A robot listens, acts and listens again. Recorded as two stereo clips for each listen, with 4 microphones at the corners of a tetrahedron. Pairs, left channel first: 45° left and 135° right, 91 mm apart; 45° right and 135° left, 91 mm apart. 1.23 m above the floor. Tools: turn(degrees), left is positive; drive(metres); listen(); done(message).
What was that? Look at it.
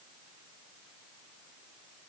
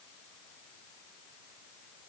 listen()
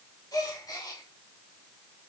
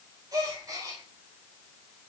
turn(degrees=90)
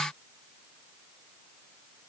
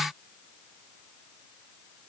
done("I heard a gasp from this way, but can't make it out now.")